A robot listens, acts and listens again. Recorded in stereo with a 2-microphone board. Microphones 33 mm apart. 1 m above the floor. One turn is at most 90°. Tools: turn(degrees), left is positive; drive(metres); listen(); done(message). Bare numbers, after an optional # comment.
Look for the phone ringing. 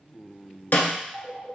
# The phone ringing: about 25° right or 155° right.
turn(-25)
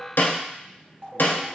# So it is at 125° right.
turn(-90)
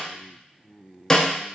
# Nothing new. It was at 35° right.
turn(-35)
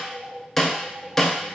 # The phone ringing is now 60° right.
turn(-60)
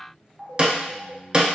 # The phone ringing is now 20° right.
turn(-20)
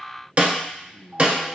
listen()
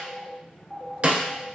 # The phone ringing is now 10° right.
turn(-10)
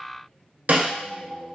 done("Facing the phone ringing, 1 to 2 m away.")